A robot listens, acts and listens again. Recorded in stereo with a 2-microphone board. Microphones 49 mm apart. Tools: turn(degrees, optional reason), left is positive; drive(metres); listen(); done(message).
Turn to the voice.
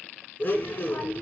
turn(degrees=50, reason="The child speaking: about 50° left or 130° left.")
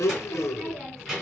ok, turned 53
done("Facing the child speaking.")